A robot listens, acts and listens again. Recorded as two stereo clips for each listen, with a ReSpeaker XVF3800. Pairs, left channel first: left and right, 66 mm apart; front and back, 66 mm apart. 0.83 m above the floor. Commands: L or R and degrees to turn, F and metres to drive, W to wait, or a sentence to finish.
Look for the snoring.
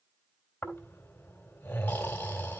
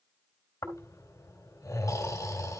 L30
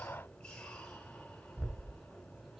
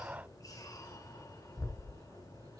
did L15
L15
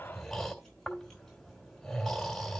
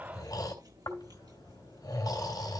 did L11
Found it: snoring, straight ahead.